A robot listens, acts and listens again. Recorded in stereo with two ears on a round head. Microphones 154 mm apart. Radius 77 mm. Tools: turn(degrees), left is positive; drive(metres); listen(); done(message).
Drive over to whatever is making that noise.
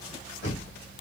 turn(degrees=70)
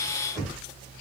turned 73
drive(metres=1.0)
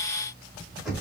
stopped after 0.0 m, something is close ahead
done("Something is in my way. I am facing the knocking but have not reached it.")